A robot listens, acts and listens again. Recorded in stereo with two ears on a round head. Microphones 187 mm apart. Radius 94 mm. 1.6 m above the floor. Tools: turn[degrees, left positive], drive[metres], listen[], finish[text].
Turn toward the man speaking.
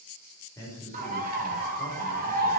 Action: turn[30]
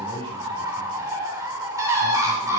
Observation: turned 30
Thought: So it is at 20° right.
Action: turn[-20]
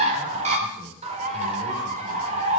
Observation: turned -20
Action: listen[]
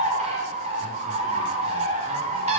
Action: listen[]
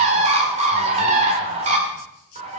Action: finish[Facing where the man speaking came from. I can't hear it now.]